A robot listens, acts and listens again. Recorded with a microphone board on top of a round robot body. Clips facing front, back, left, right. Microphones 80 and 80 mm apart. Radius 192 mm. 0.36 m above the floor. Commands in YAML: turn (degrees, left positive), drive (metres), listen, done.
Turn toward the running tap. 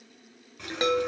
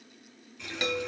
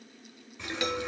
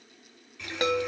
turn: 30
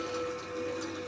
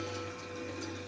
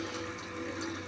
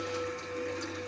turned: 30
done: "Facing the running tap, 1 to 2 m away."